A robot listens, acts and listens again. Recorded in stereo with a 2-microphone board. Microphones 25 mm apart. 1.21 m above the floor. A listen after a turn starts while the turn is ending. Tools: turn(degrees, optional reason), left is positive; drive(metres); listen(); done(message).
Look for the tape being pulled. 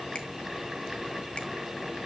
listen()
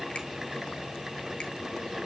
listen()
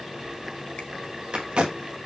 turn(degrees=-45, reason="The tape being pulled: about 45° right or 135° right.")
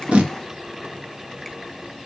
listen()
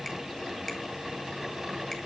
listen()
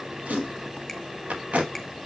turn(degrees=-90, reason="So it is at 90° right.")
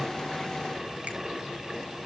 listen()
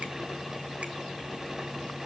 listen()
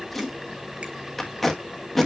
turn(degrees=10, reason="The tape being pulled is now 10° left.")
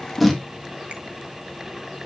done("Found it: tape being pulled, straight ahead, 1 to 2 m away.")